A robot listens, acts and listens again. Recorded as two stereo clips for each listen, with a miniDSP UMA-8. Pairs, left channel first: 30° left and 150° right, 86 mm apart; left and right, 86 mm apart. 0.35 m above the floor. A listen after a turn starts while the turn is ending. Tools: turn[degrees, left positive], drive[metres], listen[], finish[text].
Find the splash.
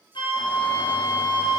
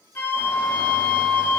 Action: listen[]
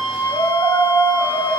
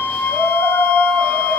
Action: listen[]
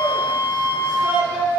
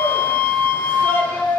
Action: finish[I can't make out a splash, only a flute and a shout.]